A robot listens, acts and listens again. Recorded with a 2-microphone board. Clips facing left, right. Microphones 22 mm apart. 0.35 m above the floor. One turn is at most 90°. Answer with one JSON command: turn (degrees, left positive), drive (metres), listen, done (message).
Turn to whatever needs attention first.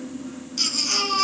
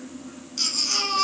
{"turn": 30}
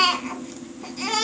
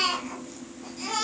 {"turn": 90}
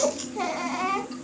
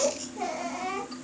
{"turn": 65}
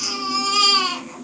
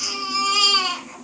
{"done": "Found it: a baby crying, straight ahead."}